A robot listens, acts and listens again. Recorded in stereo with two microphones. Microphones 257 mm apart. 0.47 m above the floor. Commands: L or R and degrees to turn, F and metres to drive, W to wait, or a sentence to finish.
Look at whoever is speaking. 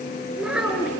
R30
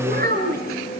R140
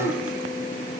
W
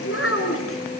L60
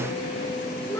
W
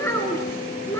L10
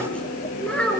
Found it: a child speaking, straight ahead, over 4 m away.